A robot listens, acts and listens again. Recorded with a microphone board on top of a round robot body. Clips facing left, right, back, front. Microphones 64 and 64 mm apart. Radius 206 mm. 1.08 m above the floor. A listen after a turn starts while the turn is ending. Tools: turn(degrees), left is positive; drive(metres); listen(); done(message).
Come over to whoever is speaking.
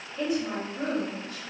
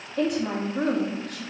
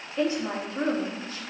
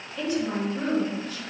turn(degrees=-120)
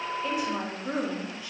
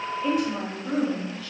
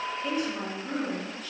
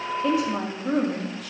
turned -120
turn(degrees=20)
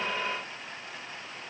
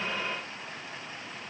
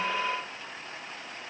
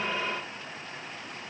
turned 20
listen()
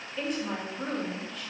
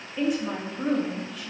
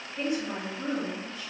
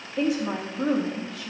drive(metres=1.0)
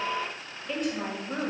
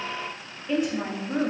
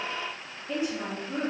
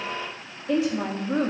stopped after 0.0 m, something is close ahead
done("Something is in my way. I am facing the woman speaking but have not reached it.")